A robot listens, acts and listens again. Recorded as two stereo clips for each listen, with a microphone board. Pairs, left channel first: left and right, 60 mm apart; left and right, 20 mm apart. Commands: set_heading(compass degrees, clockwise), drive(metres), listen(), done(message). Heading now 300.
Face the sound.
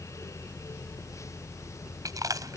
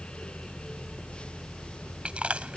set_heading(30)
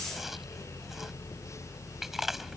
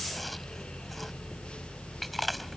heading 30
listen()
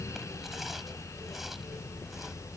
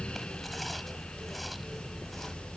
listen()
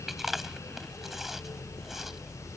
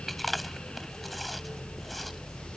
done("I heard chewing from this way, but can't make it out now.")